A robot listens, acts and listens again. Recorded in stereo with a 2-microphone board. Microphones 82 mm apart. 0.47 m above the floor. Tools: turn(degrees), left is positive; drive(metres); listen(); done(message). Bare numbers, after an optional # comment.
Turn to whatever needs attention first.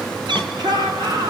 # The shout: about 60° right or 120° right.
turn(-60)
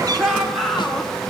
done("Facing the shout, over 4 m away.")